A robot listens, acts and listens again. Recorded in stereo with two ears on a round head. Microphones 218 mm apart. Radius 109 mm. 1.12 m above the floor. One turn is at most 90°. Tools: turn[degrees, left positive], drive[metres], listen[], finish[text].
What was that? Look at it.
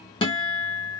Thought: The guitar: about 20° left or 160° left.
Action: turn[20]
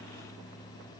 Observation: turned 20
Action: listen[]
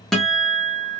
Action: finish[Facing the guitar, under 1 m away.]